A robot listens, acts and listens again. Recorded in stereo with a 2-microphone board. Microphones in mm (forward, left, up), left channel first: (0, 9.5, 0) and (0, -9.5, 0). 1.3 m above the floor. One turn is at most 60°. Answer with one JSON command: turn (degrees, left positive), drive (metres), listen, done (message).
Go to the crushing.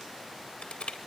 {"turn": 60}
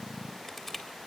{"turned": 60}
{"turn": 20}
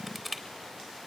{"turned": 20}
{"drive": 1.0}
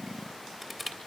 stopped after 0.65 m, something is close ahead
{"done": "Blocked. The crushing is further on, straight ahead."}